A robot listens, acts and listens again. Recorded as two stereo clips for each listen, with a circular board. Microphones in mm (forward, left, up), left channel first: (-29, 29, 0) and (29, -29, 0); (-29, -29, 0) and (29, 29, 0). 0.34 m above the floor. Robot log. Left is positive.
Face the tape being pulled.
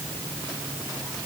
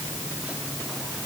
cmd idle
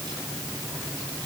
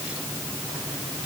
cmd idle
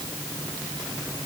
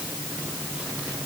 end: I can't make out tape being pulled.